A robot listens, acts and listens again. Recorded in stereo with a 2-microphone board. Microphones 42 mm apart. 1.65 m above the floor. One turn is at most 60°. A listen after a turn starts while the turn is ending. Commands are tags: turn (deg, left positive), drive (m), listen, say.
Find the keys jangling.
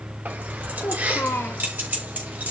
<turn deg="-50"/>
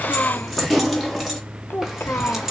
<turn deg="-10"/>
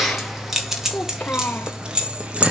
<turn deg="-30"/>
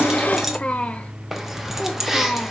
<say>Found it: keys jangling, straight ahead.</say>